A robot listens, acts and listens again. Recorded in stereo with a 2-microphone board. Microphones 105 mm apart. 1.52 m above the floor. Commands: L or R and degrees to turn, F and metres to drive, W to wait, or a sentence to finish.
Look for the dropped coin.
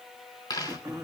L40
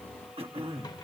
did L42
W
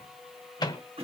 I heard a dropped coin, but can't make it out now. It was about 5° right or 100° left.